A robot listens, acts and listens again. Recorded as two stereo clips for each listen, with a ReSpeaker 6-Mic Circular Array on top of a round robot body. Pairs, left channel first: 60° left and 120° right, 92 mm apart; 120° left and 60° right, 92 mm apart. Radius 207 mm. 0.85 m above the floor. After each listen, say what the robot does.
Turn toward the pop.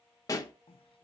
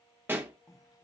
Found it: a pop, straight ahead, 1 to 2 m away.